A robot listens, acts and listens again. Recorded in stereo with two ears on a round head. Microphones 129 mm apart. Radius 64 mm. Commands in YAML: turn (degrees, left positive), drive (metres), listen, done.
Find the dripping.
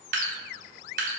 turn: -60
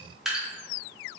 done: "Found it: dripping, straight ahead."